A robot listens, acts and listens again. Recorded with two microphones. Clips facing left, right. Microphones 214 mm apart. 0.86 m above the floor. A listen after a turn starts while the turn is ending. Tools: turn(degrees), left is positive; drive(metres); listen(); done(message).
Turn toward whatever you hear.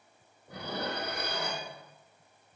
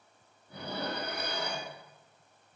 turn(degrees=90)
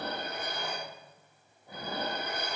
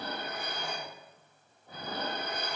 turn(degrees=10)
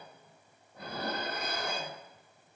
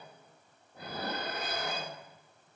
done("Facing the dishes clattering.")